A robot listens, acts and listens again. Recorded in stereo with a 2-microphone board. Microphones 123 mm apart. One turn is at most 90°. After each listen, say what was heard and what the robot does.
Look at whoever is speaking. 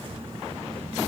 Keep listening.
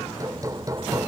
Keep listening.
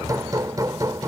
I can't make out anyone speaking, only hammering.